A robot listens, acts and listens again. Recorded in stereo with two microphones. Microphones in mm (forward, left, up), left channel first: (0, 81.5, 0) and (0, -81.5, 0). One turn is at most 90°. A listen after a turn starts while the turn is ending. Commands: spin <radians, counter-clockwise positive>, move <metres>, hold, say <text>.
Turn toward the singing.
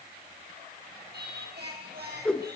spin -1.57
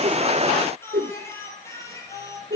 spin 0.35
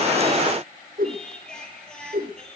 say Found it: singing, straight ahead.